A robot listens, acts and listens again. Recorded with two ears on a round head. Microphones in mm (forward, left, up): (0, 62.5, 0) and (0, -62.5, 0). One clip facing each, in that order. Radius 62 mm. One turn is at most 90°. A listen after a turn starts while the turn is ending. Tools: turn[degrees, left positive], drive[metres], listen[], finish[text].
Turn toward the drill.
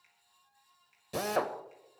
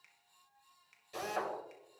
Thought: The drill: about 65° left or 115° left.
Action: turn[65]
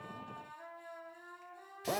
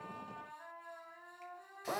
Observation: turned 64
Thought: So it is at 30° left.
Action: turn[30]
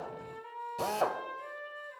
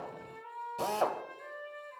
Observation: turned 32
Action: finish[Found it: a drill, straight ahead.]